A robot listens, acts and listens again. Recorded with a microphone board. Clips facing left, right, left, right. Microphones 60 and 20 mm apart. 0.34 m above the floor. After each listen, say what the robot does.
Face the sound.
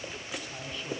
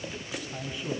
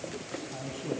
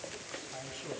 Turn 30° right.
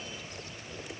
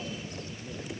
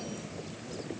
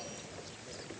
Turn 160° right.
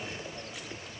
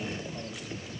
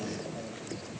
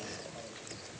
Found it: a man speaking, straight ahead, 2 to 4 m away.